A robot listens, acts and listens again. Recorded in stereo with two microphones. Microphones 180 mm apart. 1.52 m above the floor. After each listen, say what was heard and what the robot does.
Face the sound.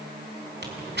The tearing paper: about 70° right or 110° right. Turn 70° right.
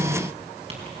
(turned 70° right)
Keep listening.
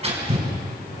So it is at 35° right. Turn 35° right.
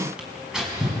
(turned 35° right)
Facing the tearing paper, over 4 m away.